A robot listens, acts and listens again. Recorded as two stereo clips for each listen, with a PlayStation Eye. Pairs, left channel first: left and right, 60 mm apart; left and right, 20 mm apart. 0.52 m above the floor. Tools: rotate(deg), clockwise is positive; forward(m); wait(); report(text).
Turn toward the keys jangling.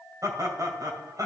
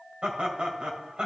wait()
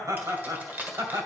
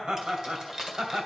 rotate(30)
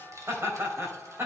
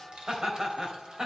rotate(115)
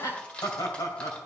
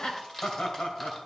rotate(-20)
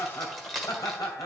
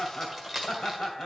report("Found it: keys jangling, straight ahead.")